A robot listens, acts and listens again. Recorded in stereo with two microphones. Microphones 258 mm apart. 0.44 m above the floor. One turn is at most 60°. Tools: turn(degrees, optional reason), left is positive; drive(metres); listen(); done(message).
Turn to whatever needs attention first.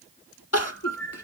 turn(degrees=60)
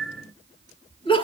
turn(degrees=20, reason="So it is at 20° left.")
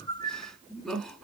done("Found it: crying, straight ahead, 1 to 2 m away.")